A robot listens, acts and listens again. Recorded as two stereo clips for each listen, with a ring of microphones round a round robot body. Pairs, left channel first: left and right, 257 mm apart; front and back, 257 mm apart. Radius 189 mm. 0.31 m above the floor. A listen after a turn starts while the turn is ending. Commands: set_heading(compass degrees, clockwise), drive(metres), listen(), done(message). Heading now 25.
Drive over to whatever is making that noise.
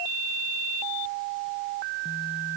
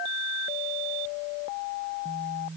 listen()
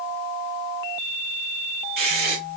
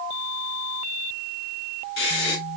set_heading(70)
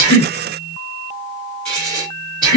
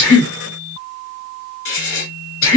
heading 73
drive(1.0)
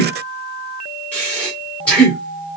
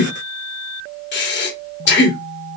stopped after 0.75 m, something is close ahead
done("I am next to the breathing.")